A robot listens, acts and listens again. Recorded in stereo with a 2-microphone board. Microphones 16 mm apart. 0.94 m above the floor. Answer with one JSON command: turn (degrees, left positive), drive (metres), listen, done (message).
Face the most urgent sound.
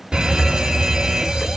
{"turn": -50}
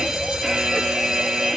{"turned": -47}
{"turn": -60}
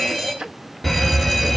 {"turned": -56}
{"done": "Found it: a fire alarm, straight ahead, 2 to 4 m away."}